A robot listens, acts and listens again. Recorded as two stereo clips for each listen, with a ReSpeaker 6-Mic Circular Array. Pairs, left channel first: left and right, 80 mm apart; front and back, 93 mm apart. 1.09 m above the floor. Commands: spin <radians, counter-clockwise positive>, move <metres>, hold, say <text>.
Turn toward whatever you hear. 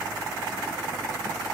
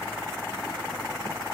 hold
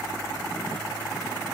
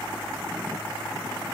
hold
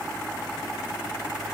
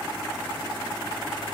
say I can't make out anything to turn to.